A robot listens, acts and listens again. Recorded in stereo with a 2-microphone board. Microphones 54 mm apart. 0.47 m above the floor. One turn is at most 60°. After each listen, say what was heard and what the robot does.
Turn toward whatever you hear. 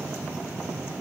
Keep listening.
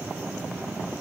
Keep listening.
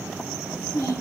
The child speaking: about 60° left or 120° left. Turn 60° left.
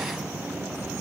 Keep listening.
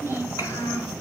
So it is at 70° left. Turn 60° left.
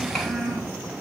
The child speaking is now 10° left. Turn 10° left.
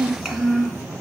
Facing the child speaking.